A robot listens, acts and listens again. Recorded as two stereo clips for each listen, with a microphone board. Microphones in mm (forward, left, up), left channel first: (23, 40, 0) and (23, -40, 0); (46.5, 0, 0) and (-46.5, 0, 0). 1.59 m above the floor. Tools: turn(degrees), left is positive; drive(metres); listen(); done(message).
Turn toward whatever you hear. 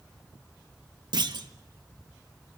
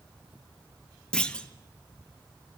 turn(degrees=-80)
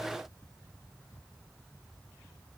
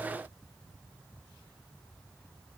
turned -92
turn(degrees=15)
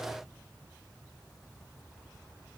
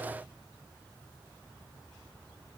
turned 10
done("I heard a clunk from this way, but can't make it out now.")